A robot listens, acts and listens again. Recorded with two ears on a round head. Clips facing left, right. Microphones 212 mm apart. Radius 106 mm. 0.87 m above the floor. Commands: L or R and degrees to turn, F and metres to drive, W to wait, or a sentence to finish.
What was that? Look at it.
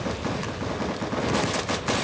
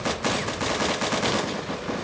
W
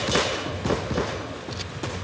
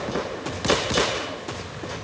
W
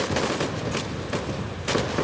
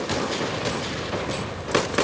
I can't make out anything to turn to.